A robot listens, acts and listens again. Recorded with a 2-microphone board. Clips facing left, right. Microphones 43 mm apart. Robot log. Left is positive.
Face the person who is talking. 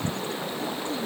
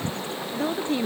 cmd yaw -90
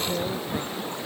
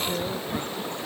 end: Found it: a woman speaking, straight ahead.